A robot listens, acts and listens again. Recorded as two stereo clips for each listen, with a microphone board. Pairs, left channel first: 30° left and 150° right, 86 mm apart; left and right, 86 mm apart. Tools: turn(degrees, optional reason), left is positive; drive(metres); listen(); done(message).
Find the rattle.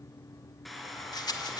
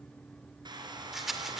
done("Found it: a rattle, straight ahead.")